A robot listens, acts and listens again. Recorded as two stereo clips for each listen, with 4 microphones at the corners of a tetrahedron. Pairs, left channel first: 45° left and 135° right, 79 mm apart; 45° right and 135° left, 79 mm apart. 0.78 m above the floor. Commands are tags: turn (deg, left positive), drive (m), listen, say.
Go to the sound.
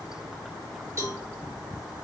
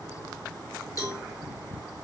<turn deg="-85"/>
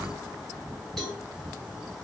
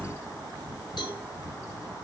<turn deg="-40"/>
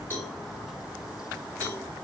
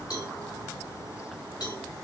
<turn deg="-20"/>
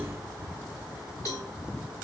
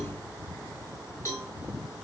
<drive m="1.0"/>
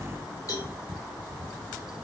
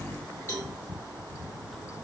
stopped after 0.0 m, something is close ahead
<turn deg="10"/>
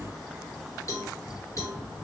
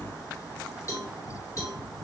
<say>Blocked. The cowbell is further on, straight ahead.</say>